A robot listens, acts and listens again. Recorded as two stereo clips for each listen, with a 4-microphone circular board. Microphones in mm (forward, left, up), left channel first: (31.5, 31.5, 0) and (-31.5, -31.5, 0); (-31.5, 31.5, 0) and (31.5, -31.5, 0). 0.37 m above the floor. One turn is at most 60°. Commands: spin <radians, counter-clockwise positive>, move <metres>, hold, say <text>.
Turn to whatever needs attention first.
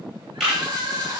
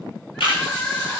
spin -1.05
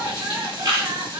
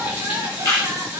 spin -1.05
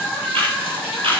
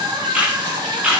spin -0.70
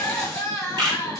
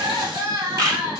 spin -0.17
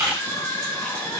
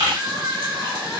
say Found it: crying, straight ahead, 1 to 2 m away.